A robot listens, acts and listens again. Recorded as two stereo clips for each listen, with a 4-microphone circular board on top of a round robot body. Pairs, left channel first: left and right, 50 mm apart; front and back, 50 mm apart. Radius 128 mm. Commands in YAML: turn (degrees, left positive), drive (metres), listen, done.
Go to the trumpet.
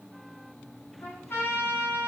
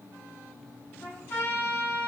turn: 45
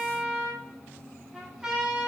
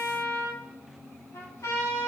turn: -15
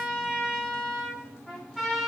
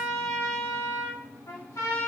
drive: 1.0
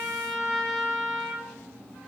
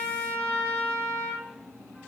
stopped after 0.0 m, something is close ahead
done: "Blocked. The trumpet is further on, straight ahead."